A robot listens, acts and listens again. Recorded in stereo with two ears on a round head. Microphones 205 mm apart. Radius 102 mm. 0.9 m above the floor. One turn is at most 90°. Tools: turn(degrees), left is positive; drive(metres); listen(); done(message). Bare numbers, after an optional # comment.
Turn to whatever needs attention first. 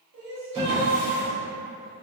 # The crying: about 60° right or 120° right.
turn(-60)
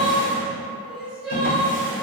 done("Found it: crying, straight ahead.")